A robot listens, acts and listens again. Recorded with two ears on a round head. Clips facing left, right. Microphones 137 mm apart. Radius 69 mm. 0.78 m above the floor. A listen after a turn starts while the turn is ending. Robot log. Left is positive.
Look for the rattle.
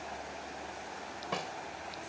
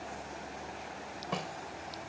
cmd idle
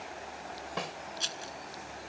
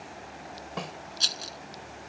note: The rattle: about 45° right or 135° right.
cmd yaw -45
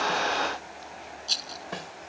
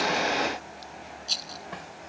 end: Facing the rattle.